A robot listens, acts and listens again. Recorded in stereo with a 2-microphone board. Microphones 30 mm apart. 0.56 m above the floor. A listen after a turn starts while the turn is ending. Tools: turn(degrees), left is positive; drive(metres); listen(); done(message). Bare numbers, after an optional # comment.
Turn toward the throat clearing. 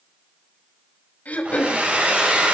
# The throat clearing: about 55° left or 125° left.
turn(55)
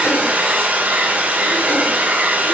listen()
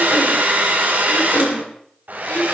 # So it is at 65° left.
turn(65)
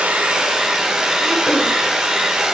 listen()
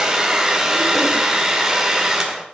listen()
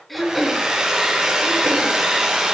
done("Facing the throat clearing.")